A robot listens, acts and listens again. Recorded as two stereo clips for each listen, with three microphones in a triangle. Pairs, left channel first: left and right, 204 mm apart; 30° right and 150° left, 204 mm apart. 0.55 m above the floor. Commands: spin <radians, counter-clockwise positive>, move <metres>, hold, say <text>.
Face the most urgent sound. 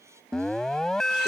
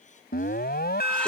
say Found it: an alarm, straight ahead.